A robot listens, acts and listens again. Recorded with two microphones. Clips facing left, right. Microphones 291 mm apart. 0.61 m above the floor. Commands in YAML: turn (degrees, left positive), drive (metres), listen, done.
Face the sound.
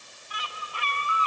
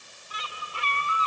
turn: -30
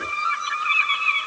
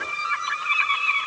turn: -115
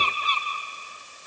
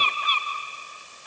turn: 30
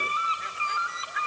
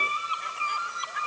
done: "Found it: a bird, straight ahead, 2 to 4 m away."